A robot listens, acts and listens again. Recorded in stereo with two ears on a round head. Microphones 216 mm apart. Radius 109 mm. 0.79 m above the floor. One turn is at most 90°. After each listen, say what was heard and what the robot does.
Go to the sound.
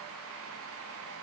Keep listening.
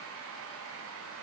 Keep listening.
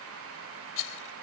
The rattle: about 60° left or 120° left. Turn 60° left.
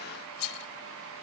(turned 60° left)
So it is at 60° left. Turn 60° left.
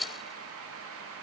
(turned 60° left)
Drive 1.0 m forward.
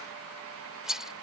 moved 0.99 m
Drive 1.0 m forward.
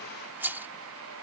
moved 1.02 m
The rattle is now 10° right. Turn 10° right.
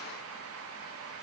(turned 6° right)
Keep listening.
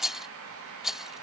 Drive 1.0 m forward.
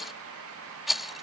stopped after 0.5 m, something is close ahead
Arrived at the rattle, straight ahead.